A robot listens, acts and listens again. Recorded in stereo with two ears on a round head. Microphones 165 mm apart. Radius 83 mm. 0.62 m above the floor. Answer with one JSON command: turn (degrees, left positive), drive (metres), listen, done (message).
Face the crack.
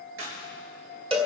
{"turn": -90}
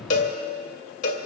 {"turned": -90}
{"done": "I heard a crack from this way, but can't make it out now."}